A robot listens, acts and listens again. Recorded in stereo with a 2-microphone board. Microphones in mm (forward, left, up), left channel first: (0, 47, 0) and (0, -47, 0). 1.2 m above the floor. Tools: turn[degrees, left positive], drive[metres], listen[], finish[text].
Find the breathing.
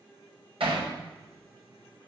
Action: listen[]
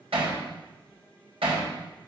Action: listen[]
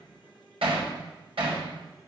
Action: finish[I can't make out breathing, only hammering.]